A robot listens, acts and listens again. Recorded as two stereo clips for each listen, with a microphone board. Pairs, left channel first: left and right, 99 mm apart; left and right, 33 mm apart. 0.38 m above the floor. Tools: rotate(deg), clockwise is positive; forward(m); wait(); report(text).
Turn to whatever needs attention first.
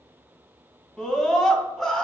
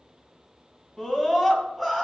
rotate(-30)
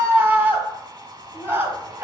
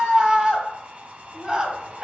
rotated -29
rotate(25)
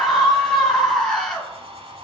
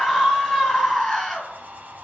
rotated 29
report("Facing the scream.")